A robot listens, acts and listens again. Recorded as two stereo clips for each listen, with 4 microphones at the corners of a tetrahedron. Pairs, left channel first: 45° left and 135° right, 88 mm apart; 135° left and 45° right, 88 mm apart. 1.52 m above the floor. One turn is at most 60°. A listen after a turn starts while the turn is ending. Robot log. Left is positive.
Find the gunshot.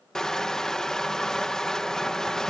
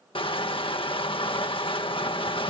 cmd idle
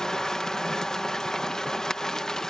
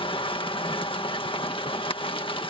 cmd idle
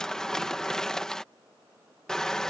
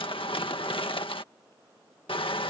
end: I can't make out a gunshot, only crushing.